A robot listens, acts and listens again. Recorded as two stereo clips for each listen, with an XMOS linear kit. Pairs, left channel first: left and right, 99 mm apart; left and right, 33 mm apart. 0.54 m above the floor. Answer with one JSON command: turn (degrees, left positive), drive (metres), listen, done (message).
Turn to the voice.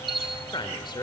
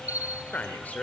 {"turn": 50}
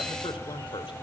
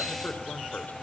{"turn": 70}
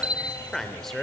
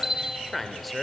{"done": "Found it: a man speaking, straight ahead."}